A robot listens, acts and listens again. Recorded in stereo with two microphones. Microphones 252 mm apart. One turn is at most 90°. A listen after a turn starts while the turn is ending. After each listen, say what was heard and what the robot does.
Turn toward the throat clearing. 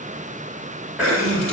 Turn 30° right.
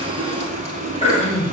So it is at 25° left. Turn 25° left.
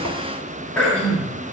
Facing the throat clearing.